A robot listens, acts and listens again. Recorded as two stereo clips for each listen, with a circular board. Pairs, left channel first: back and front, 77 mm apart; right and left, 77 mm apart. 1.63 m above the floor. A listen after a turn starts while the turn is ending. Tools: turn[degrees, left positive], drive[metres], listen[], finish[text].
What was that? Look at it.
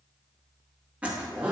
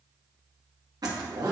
Thought: The zipper: 70° left.
Action: turn[70]
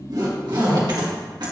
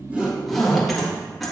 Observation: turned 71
Action: finish[Found it: a zipper, straight ahead.]